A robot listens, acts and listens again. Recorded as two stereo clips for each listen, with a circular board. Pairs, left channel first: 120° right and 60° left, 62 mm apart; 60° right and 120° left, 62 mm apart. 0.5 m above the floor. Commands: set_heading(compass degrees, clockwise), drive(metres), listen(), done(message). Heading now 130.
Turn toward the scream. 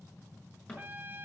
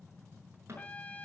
listen()
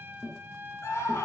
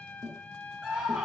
set_heading(295)
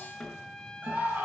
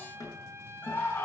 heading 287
done("Found it: a scream, straight ahead.")